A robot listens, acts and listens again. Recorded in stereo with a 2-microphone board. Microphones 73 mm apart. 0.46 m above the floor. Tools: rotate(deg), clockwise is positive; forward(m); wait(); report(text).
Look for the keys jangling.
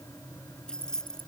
rotate(-30)
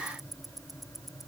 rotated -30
wait()
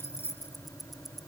rotate(-145)
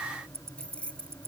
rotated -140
rotate(-15)
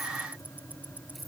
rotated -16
wait()
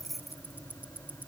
report("Found it: keys jangling, straight ahead.")